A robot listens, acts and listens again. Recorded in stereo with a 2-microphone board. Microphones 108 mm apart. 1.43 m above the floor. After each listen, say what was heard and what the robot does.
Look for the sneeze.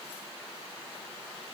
Keep listening.
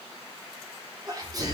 The sneeze: about 35° right or 145° right. Turn 35° right.
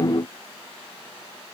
Keep listening.
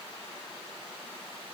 I heard a sneeze, but can't make it out now. It was about straight ahead or 110° right.